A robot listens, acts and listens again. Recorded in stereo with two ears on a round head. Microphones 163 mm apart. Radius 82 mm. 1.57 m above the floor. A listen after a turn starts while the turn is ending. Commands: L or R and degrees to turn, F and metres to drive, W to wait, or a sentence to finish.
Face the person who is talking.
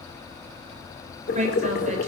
R40
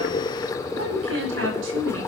R100
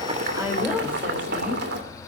R10
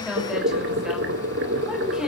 Found it: a woman speaking, straight ahead, over 4 m away.